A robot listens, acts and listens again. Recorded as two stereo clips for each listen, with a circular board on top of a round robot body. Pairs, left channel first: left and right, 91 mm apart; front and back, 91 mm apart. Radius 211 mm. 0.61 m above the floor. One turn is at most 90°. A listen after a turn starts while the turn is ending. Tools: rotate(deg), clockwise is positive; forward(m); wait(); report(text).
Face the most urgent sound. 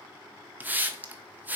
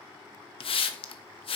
wait()
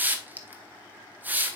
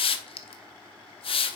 wait()
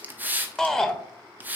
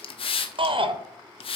rotate(-90)
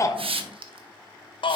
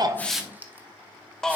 rotate(-85)
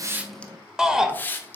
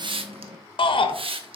report("Found it: a shout, straight ahead.")